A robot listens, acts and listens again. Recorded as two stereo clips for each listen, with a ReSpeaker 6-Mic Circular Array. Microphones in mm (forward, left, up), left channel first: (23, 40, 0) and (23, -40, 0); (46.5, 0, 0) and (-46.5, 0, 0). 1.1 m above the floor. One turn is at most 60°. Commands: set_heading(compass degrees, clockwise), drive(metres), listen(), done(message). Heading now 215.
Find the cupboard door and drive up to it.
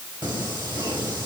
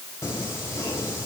listen()
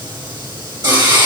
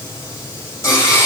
listen()
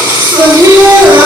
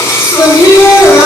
done("I can't make out a cupboard door to turn to.")